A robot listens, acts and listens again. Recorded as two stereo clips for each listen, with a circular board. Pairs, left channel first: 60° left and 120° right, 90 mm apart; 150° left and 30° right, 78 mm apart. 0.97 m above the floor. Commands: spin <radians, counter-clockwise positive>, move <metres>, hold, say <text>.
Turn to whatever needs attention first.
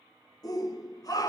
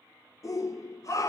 spin 1.83
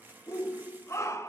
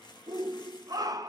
say Facing the shout, under 1 m away.